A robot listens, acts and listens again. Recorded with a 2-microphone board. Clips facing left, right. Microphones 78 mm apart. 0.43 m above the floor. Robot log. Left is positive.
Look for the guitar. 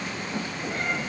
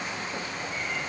cmd idle
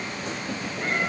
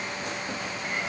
cmd idle
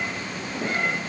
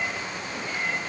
end: I can't make out a guitar to turn to.